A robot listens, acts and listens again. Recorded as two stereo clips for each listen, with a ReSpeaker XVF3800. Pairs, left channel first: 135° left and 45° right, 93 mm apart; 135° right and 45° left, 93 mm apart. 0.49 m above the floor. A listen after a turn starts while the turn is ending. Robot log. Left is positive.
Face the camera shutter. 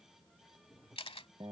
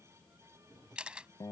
note: The camera shutter: 125° left.
cmd yaw +125
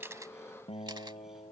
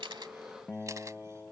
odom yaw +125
cmd idle
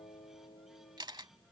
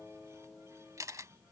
note: The camera shutter is now 10° right.
cmd yaw -10
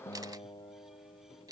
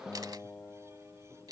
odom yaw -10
end: Facing the camera shutter.